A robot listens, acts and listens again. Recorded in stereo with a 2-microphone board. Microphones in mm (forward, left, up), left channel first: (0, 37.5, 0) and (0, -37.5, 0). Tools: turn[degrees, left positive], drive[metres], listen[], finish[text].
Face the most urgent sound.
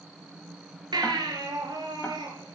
Thought: The baby crying: about 70° right or 110° right.
Action: turn[-70]
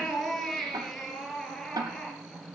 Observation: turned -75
Action: finish[Found it: a baby crying, straight ahead.]